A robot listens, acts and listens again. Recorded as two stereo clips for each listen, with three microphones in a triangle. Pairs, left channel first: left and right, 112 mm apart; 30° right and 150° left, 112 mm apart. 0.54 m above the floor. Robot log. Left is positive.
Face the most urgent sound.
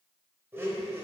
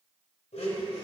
cmd idle
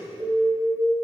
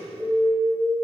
note: The alarm: 130° right.
cmd yaw -130
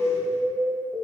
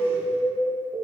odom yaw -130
note: The alarm is now 25° right.
cmd yaw -25
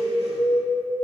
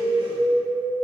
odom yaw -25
note: The alarm is now 10° left.
cmd yaw +10
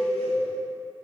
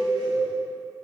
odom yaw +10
end: Found it: an alarm, straight ahead.